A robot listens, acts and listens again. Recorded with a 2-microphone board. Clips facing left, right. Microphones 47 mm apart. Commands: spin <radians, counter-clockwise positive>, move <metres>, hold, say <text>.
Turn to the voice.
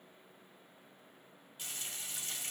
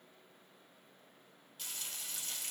hold
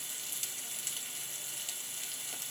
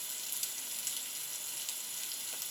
hold
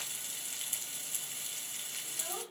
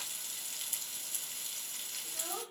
spin -0.35
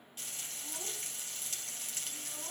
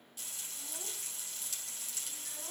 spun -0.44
hold
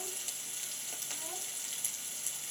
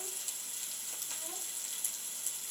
hold
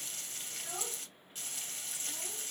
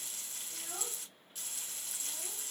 say I heard a child speaking, but can't make it out now. It was about 5° left or 135° right.